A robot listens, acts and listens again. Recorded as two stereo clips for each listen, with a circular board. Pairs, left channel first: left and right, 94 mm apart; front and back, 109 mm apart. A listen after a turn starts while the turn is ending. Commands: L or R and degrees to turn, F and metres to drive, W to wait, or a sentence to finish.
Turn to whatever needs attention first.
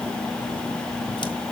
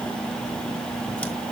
W
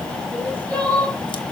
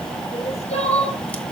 L15
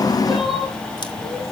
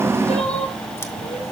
W
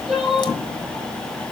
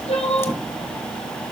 Facing the crying.